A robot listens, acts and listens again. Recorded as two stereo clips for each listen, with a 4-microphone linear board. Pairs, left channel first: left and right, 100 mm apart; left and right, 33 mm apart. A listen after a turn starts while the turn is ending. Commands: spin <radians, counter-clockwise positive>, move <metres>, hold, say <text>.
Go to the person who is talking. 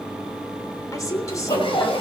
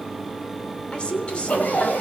spin 0.61
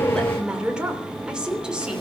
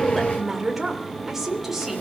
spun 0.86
spin -0.17
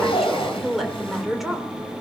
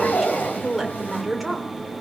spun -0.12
move 1.0
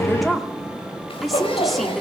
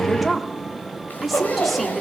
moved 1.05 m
move 1.0
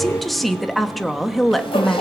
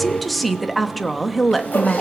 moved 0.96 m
move 1.0
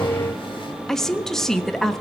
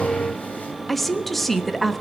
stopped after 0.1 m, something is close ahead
say Arrived at the woman speaking, straight ahead.